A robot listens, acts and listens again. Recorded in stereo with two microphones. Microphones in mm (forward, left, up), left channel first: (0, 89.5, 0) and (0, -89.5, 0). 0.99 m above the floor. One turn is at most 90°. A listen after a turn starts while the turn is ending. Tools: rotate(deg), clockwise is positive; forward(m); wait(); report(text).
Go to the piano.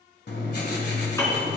rotate(-15)
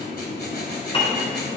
rotate(-90)
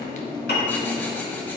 rotate(-90)
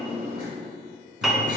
forward(1.0)
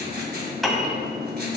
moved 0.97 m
forward(1.0)
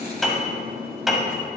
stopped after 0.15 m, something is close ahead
report("I am next to the piano.")